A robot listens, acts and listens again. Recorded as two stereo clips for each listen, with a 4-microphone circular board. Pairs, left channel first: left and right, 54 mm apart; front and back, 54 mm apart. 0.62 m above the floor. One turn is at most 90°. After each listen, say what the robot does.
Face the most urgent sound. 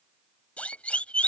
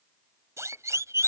Turn 90° left.
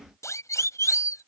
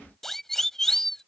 Turn 85° left.
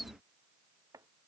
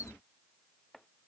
Keep listening.
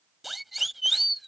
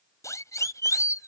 Found it: a siren, straight ahead.